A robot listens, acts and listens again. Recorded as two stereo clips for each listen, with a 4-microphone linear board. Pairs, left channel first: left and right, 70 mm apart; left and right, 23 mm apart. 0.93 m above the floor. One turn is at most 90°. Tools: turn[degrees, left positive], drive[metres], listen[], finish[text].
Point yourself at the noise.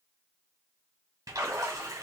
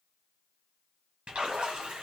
Thought: The splash: about 60° right or 120° right.
Action: turn[-60]
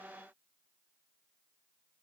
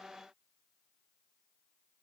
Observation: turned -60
Action: listen[]
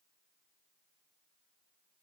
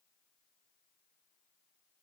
Action: finish[I heard a splash, but can't make it out now. It was about straight ahead or 60° right.]